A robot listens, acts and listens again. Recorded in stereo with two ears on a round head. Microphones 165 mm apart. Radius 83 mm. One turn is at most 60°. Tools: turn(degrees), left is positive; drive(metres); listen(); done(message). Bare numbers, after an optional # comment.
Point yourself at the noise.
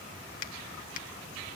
# The finger snap: about 45° left or 135° left.
turn(45)
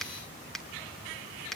done("Facing the finger snap, 1 to 2 m away.")